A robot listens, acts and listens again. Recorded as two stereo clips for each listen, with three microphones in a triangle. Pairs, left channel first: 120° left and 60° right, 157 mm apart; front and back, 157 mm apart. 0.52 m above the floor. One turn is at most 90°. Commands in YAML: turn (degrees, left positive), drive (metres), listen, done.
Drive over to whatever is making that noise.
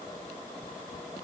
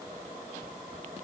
listen: true
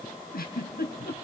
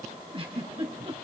turn: 90
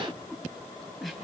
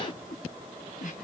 turn: 30
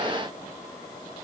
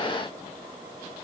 listen: true
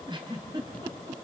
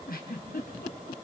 drive: 1.0
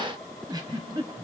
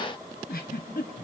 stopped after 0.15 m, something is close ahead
done: "Something is in my way. I am facing the giggle but have not reached it."